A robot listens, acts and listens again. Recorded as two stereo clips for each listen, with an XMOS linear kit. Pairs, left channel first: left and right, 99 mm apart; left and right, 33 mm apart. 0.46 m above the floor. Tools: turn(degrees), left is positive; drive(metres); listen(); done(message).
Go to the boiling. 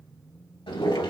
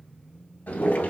turn(degrees=70)
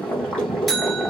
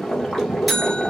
turn(degrees=10)
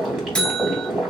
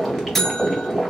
drive(metres=1.0)
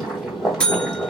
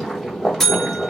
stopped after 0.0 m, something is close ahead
done("Something is in my way. I am facing the boiling but have not reached it.")